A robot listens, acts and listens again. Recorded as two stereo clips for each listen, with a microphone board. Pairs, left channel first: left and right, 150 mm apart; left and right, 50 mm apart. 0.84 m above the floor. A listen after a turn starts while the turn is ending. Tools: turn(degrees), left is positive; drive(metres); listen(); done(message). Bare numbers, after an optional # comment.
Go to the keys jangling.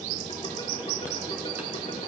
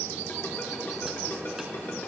listen()
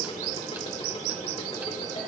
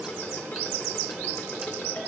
listen()
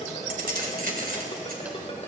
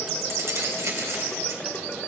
turn(-90)
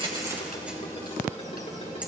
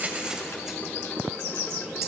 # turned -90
listen()
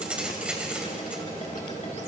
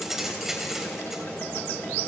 drive(1.0)
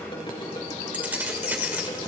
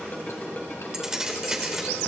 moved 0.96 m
# The keys jangling is now 10° right.
turn(-10)
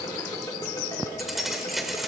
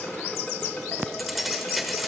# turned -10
drive(1.0)
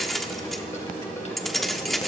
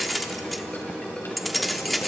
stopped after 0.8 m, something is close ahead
done("Arrived at the keys jangling, straight ahead.")